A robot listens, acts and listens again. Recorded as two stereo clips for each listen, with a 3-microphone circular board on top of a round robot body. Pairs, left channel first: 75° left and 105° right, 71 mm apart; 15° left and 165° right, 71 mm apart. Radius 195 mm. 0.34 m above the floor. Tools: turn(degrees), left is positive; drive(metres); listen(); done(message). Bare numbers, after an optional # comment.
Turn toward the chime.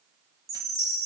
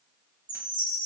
# The chime: 150° right.
turn(-150)
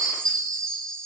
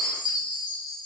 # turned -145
done("Found it: a chime, straight ahead, 2 to 4 m away.")